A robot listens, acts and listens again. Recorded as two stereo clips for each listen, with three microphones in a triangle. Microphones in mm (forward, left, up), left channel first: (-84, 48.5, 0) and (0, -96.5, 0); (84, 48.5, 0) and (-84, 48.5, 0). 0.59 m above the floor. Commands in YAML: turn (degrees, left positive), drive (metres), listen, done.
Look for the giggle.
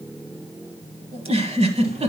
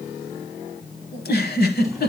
turn: -10
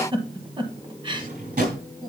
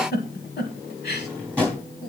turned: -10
done: "Facing the giggle, 1 to 2 m away."